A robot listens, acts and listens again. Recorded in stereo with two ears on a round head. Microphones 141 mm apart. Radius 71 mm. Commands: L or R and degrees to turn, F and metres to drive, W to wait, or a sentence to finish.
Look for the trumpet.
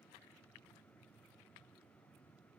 W
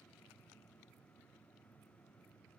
W
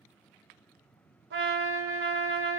R90
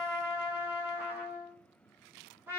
R15
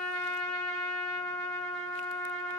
Found it: a trumpet, straight ahead, under 1 m away.